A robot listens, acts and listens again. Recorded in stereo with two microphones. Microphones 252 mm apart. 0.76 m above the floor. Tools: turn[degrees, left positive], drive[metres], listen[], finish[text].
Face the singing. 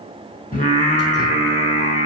Thought: The singing: about 25° left or 155° left.
Action: turn[25]
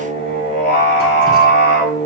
Thought: The singing: about 40° left or 140° left.
Action: turn[40]
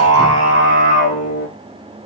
Thought: So it is at 110° left.
Action: turn[110]
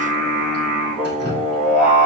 Action: finish[Facing the singing, over 4 m away.]